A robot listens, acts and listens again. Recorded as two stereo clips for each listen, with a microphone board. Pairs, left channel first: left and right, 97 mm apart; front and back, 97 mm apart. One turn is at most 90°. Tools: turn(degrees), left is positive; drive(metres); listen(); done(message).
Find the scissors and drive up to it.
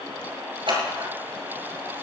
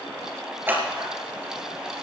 turn(degrees=-90)
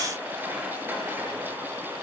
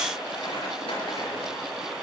turn(degrees=-25)
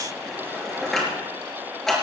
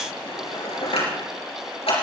drive(metres=1.0)
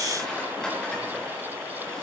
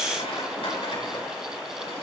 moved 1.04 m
turn(degrees=10)
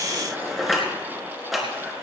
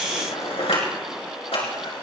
drive(metres=1.0)
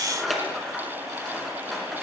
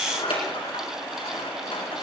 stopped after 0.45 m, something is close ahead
done("Something is in my way. I am facing the scissors but have not reached it.")